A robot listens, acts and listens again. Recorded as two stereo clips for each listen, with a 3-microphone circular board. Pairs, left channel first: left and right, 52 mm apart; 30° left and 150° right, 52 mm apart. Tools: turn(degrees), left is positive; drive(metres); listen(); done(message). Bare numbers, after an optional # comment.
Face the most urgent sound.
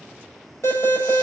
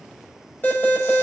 # The alarm: 70° left.
turn(70)
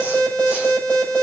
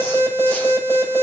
# The alarm is now 25° left.
turn(25)
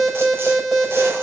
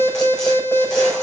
done("Found it: an alarm, straight ahead.")